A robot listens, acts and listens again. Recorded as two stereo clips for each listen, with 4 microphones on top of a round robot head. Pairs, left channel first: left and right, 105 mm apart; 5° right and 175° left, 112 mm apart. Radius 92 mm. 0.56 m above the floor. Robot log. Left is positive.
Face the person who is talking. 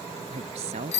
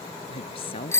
note: The woman speaking: 55° right.
cmd yaw -55
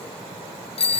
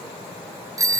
cmd idle
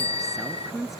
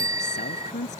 end: Found it: a woman speaking, straight ahead.